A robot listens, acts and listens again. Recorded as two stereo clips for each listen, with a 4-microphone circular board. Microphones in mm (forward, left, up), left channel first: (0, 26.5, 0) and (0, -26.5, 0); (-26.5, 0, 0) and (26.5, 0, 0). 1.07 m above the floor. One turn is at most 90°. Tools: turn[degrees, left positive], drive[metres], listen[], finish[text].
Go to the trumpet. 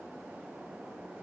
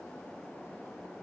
Action: listen[]
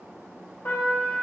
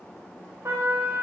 Thought: The trumpet: 50° left.
Action: turn[50]
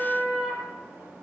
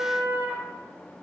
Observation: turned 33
Thought: The trumpet is now 20° left.
Action: turn[20]
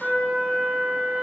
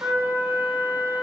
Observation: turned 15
Action: drive[1.0]
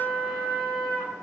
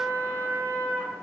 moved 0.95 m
Thought: The trumpet is now 10° left.
Action: turn[10]
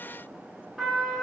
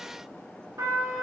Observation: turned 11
Action: drive[1.0]
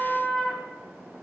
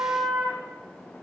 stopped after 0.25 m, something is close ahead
Action: finish[Arrived at the trumpet, straight ahead.]